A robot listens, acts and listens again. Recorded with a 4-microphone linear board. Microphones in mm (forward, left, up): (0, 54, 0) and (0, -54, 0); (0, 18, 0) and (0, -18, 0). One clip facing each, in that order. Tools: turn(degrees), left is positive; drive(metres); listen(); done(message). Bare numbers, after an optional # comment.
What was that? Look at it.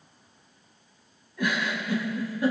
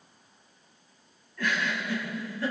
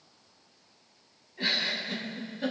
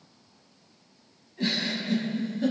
# The giggle: about 15° left or 165° left.
turn(15)
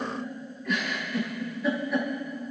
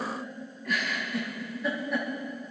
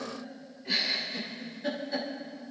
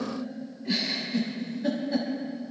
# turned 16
done("Facing the giggle.")